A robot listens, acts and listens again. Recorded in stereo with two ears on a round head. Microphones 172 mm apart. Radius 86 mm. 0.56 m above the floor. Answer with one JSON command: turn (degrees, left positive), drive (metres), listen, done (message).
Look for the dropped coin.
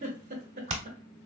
{"listen": true}
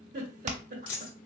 {"turn": 90}
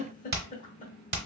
{"done": "Facing where the dropped coin came from. I can't hear it now."}